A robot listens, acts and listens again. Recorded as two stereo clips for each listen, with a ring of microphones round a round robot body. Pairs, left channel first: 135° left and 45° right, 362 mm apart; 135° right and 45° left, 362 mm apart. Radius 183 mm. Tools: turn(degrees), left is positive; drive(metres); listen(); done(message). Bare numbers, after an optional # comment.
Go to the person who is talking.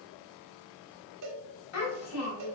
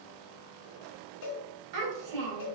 # The child speaking: 85° left.
turn(85)
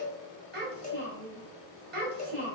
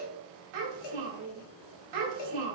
# The child speaking is now 20° left.
turn(20)
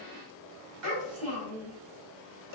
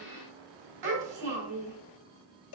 drive(1.0)
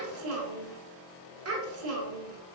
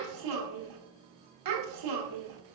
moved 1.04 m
# The child speaking is now 10° left.
turn(10)
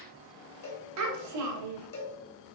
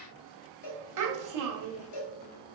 drive(1.0)
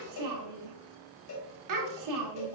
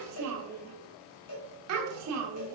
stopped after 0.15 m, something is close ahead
done("I am next to the child speaking.")